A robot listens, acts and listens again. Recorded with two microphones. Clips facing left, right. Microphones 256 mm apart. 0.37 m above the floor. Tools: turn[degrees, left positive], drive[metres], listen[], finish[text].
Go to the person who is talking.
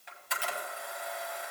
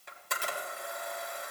Action: listen[]
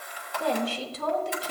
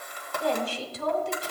Thought: The woman speaking: about 65° left or 115° left.
Action: turn[65]
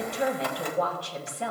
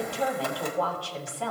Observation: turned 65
Thought: So it is at 25° left.
Action: turn[25]
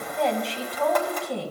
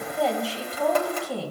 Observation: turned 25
Action: drive[1.0]
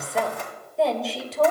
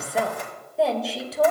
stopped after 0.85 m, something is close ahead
Action: finish[I am next to the woman speaking.]